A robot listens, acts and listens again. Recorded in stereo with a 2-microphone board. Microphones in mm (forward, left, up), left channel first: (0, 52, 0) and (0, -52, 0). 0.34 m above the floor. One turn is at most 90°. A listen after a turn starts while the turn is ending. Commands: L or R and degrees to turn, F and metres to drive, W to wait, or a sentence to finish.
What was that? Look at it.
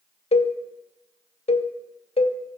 L70
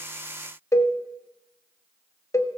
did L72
L30
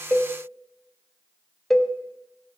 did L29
Facing the cowbell, under 1 m away.